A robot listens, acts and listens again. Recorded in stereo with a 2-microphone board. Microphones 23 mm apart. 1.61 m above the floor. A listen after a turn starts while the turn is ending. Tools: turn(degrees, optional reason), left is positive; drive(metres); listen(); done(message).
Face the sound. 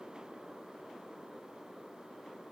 listen()
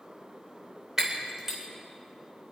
turn(degrees=-25, reason="The breaking glass: about 25° right or 155° right.")
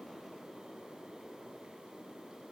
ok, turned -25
listen()
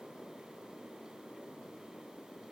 done("I heard breaking glass, but can't make it out now. It was about straight ahead or 130° right.")